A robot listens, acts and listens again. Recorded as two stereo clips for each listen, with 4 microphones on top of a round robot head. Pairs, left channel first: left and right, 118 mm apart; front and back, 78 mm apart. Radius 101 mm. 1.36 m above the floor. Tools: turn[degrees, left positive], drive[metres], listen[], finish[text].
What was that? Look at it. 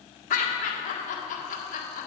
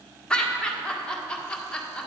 Thought: The laughter: 75° left.
Action: turn[75]
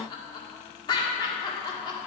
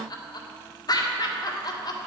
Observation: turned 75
Thought: The laughter is now 30° left.
Action: turn[30]
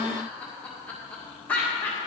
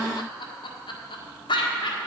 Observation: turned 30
Thought: The laughter is now 10° left.
Action: turn[10]
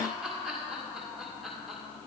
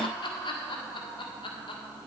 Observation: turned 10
Action: finish[Found it: laughter, straight ahead, 1 to 2 m away.]